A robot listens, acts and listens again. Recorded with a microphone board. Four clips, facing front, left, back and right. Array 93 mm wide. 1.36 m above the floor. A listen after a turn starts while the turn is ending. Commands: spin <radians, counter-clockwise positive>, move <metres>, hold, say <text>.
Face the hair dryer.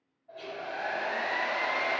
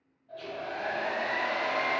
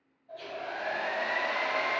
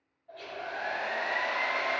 spin -1.13
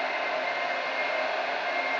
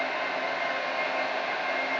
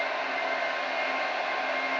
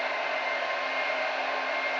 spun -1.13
say Found it: a hair dryer, straight ahead, 1 to 2 m away.